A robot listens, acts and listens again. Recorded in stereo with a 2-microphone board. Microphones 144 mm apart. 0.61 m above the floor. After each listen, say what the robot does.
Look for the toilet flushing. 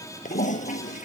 Turn 65° left.
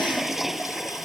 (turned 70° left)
Found it: a toilet flushing, straight ahead.